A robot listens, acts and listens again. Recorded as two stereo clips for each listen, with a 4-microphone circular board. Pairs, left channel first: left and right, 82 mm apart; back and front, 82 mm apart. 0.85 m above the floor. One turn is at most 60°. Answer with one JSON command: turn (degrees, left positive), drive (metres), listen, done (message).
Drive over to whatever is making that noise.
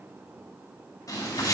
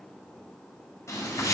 {"turn": 60}
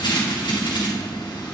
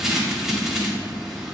{"turn": 60}
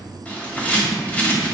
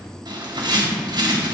{"turn": 15}
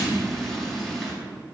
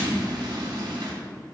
{"drive": 1.0}
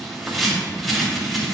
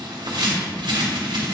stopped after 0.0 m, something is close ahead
{"done": "Something is in my way. I am facing the bird but have not reached it."}